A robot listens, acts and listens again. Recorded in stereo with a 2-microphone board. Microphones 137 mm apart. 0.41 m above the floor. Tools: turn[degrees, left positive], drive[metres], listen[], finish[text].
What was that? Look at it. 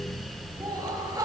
Thought: The laughter: about 25° right or 155° right.
Action: turn[-25]
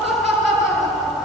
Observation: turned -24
Action: finish[Facing the laughter, over 4 m away.]